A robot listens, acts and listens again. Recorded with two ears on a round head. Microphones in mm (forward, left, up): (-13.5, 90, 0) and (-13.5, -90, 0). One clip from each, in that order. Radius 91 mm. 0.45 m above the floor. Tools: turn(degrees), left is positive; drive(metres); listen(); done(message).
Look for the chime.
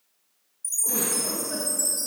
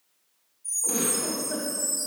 turn(degrees=50)
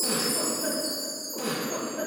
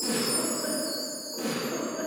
turn(degrees=80)
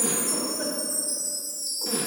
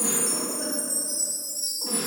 done("Found it: a chime, straight ahead, 1 to 2 m away.")